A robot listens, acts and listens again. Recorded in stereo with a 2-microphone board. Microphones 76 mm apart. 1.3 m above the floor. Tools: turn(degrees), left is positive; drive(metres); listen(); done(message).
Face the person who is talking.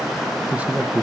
turn(degrees=-20)
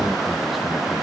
listen()
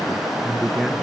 done("Facing the man speaking, 1 to 2 m away.")